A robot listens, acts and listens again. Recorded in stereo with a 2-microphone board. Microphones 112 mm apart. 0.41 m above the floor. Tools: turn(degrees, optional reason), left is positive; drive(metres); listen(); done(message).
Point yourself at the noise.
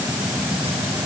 listen()
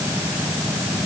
listen()
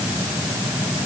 done("I can't make out anything to turn to.")